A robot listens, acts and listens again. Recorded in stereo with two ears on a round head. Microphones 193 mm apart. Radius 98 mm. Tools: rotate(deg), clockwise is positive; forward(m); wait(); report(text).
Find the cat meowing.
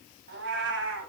rotate(65)
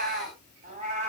rotate(30)
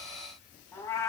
rotate(-15)
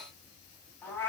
rotate(-10)
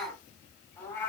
rotate(-10)
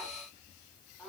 report("Facing the cat meowing, 2 to 4 m away.")